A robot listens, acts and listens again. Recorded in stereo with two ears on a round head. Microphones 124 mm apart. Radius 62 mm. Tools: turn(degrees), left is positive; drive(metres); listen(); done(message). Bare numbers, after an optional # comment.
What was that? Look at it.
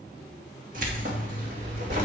turn(-90)
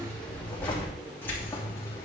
# So it is at 20° left.
turn(20)
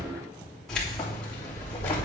# The keys jangling is now 15° left.
turn(15)
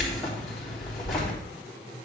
done("Found it: keys jangling, straight ahead.")